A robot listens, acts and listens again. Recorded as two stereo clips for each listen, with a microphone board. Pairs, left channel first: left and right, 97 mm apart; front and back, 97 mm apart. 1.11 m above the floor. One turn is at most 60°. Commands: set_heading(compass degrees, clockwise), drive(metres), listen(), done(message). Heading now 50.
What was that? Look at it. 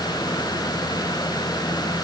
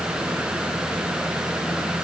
listen()
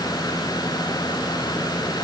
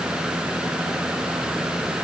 listen()
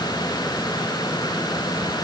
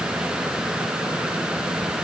done("I can't make out anything to turn to.")